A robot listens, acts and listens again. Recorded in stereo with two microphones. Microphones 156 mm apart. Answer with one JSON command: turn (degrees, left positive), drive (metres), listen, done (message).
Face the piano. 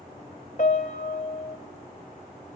{"turn": 55}
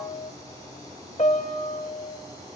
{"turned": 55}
{"turn": 55}
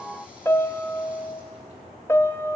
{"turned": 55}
{"turn": 20}
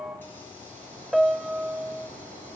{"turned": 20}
{"done": "Facing the piano, under 1 m away."}